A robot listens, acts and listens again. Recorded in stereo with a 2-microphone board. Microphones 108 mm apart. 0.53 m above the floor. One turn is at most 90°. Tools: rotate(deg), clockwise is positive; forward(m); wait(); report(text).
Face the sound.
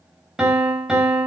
rotate(30)
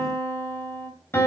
rotate(-25)
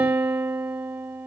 rotate(20)
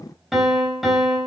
report("Facing the piano, 2 to 4 m away.")